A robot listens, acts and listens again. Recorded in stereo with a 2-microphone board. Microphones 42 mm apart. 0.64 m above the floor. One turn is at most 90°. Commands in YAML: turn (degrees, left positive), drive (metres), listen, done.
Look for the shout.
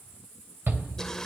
turn: -65
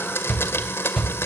done: "Facing the shout."